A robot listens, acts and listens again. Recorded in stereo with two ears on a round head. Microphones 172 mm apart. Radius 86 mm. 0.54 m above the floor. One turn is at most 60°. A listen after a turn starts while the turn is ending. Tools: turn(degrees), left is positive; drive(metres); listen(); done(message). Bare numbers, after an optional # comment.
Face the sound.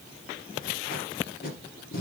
# The tape being pulled: about 50° left or 130° left.
turn(50)
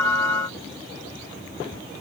listen()
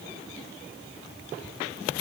listen()
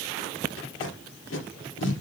# So it is at 75° left.
turn(60)
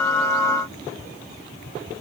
# Nothing new. It was at 15° left.
turn(15)
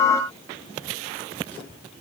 listen()
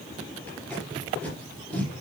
# The tape being pulled is now 10° left.
turn(10)
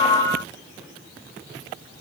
listen()
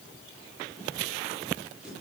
done("Facing the tape being pulled, 2 to 4 m away.")